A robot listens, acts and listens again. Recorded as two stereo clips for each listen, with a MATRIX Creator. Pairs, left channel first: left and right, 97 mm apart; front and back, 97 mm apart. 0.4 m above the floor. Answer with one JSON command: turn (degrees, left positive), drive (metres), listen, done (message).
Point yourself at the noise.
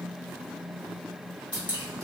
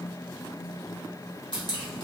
{"turn": -15}
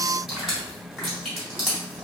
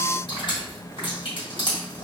{"done": "Found it: dripping, straight ahead."}